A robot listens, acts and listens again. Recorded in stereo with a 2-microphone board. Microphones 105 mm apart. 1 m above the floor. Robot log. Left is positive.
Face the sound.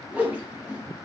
cmd yaw -30
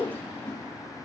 note: So it is at 15° left.
cmd yaw +15
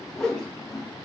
end: Facing the whoosh, under 1 m away.